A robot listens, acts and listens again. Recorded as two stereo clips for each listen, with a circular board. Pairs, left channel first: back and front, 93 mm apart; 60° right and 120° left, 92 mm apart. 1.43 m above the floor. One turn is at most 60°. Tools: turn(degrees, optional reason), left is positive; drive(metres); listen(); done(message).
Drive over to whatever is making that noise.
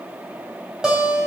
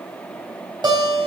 turn(degrees=60, reason="The guitar: 85° left.")
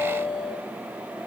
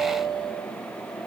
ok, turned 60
turn(degrees=35, reason="The guitar is now 35° left.")
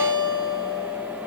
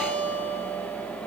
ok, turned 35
turn(degrees=10, reason="The guitar is now 10° left.")
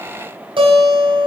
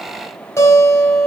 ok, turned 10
drive(metres=1.0)
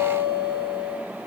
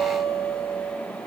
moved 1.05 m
drive(metres=1.0)
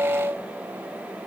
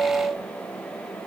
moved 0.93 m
drive(metres=1.0)
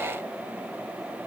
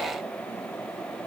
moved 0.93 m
listen()
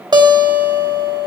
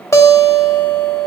turn(degrees=-10, reason="The guitar is now 10° right.")
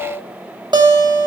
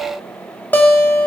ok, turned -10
drive(metres=1.0)
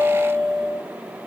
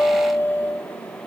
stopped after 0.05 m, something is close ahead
done("I am next to the guitar.")